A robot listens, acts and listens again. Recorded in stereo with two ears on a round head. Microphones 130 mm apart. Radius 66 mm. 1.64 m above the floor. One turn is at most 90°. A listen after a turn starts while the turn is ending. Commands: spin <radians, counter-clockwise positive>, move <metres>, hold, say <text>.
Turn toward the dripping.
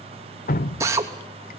spin 1.13
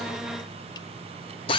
hold
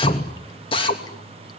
spin 0.52
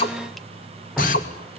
say Facing the dripping.